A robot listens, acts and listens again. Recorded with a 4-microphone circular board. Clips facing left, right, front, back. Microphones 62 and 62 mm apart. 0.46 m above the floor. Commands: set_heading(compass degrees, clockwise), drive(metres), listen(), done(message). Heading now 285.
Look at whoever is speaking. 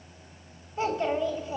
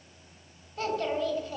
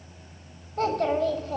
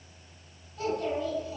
set_heading(265)
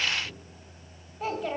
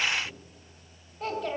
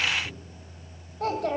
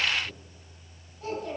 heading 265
done("Facing the child speaking.")